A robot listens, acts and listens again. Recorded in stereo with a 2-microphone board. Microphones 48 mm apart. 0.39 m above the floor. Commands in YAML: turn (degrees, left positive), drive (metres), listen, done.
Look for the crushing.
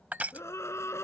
turn: -30
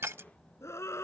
turn: -115
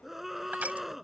turn: -35
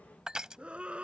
turn: -15
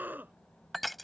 done: "Facing the crushing."